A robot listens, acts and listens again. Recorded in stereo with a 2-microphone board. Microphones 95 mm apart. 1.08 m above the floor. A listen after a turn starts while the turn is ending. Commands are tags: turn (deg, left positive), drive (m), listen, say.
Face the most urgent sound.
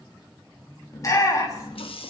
<turn deg="35"/>
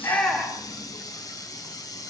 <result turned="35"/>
<say>Found it: a shout, straight ahead.</say>